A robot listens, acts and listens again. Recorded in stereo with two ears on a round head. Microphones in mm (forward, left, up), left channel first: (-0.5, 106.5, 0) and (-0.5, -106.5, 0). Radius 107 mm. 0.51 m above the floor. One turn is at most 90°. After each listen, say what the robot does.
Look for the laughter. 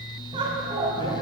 Turn 20° right.
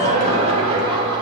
Turn 20° right.
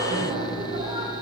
Turn 25° right.
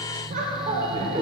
Turn 25° right.
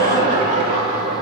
Turn 30° right.
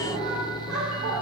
Turn 90° right.
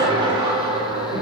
Turn 20° right.
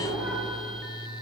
Facing the laughter, 1 to 2 m away.